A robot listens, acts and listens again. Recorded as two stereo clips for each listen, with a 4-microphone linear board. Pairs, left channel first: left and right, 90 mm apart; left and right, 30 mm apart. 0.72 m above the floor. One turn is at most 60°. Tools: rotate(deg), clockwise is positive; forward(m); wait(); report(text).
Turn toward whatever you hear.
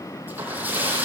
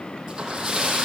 rotate(20)
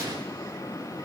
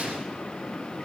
wait()
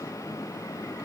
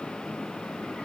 report("I heard a splash, but can't make it out now. It was about straight ahead or 140° right.")